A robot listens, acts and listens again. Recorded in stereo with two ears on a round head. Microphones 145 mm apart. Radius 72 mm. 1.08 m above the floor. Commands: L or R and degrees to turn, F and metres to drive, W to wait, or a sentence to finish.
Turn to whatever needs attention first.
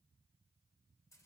W
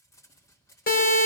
L60
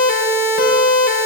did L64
L55
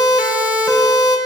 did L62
Facing the siren, over 4 m away.